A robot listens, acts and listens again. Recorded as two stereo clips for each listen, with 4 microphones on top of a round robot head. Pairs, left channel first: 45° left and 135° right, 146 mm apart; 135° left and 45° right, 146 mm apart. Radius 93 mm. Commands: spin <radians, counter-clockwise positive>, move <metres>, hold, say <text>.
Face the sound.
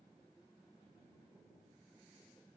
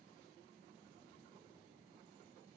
hold
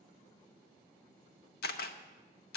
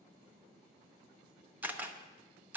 spin 0.61
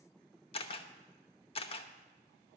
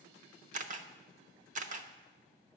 spin -0.17
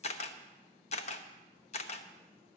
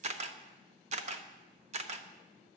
say Facing the camera shutter.